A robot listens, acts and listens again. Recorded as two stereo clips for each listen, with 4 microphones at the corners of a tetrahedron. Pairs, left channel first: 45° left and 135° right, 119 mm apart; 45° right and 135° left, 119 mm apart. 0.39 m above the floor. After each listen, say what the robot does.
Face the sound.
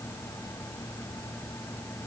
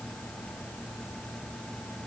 Keep listening.
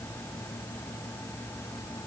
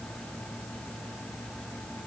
Keep listening.
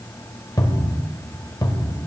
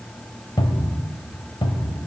Turn 10° right.
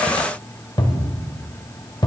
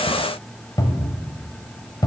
Found it: a cupboard door, straight ahead.